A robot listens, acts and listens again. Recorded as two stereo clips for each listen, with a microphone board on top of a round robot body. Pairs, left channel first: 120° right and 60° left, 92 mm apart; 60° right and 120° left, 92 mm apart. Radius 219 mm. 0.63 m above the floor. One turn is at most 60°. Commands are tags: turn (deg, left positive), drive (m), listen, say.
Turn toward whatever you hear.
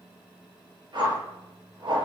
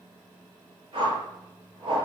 <turn deg="60"/>
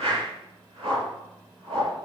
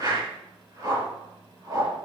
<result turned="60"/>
<turn deg="60"/>
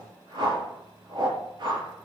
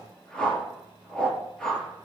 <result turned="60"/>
<turn deg="25"/>
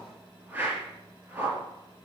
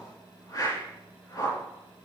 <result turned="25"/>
<turn deg="-10"/>
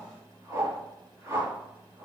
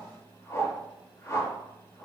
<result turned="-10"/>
<say>Found it: a whoosh, straight ahead, over 4 m away.</say>